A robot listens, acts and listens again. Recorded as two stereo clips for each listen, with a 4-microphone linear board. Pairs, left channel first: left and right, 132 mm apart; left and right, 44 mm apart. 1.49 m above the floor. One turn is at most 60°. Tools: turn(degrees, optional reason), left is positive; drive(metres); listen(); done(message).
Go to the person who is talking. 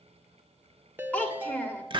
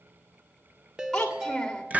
turn(degrees=30)
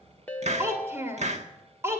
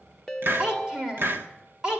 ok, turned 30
turn(degrees=-20, reason="So it is at 20° right.")
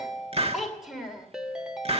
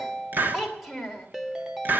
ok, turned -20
drive(metres=1.0)
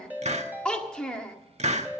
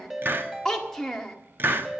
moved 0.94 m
drive(metres=1.0)
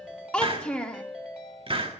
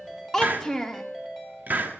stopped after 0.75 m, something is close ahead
turn(degrees=10, reason="The child speaking is now 10° left.")
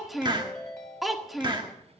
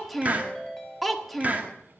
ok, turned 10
done("I am next to the child speaking.")